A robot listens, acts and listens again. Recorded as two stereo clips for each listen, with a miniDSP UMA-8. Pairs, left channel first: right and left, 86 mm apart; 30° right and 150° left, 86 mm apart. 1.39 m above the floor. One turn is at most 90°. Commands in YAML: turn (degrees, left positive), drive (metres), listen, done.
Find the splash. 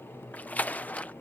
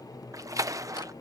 turn: -90
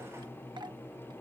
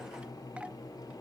turn: -70
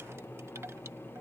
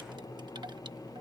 done: "I heard a splash from this way, but can't make it out now."